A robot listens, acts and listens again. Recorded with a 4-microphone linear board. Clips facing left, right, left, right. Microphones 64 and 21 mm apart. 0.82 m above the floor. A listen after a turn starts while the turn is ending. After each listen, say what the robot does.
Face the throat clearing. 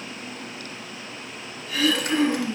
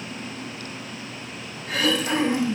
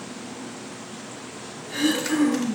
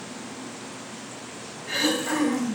Turn 65° right.
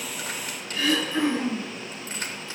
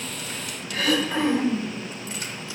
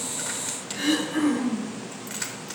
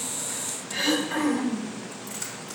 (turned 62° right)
Turn 50° right.
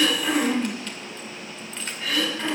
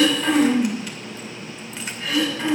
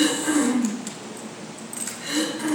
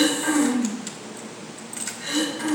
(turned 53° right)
Found it: throat clearing, straight ahead.